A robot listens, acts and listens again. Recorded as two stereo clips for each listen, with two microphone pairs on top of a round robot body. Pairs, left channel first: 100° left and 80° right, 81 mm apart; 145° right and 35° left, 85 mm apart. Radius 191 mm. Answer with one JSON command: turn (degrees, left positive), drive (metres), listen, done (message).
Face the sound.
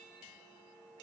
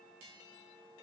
{"listen": true}
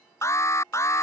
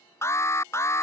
{"turn": 155}
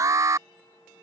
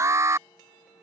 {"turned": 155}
{"turn": -25}
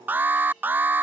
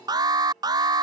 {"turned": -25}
{"turn": -10}
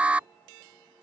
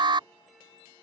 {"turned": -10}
{"done": "Facing the alarm."}